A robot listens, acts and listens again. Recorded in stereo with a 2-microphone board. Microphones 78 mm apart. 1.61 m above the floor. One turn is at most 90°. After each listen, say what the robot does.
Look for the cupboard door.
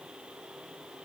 Keep listening.
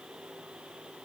Keep listening.
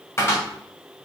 Turn 35° left.
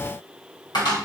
Turn 90° left.
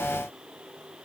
Turn 20° left.
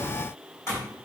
Turn 40° left.
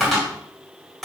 Found it: a cupboard door, straight ahead.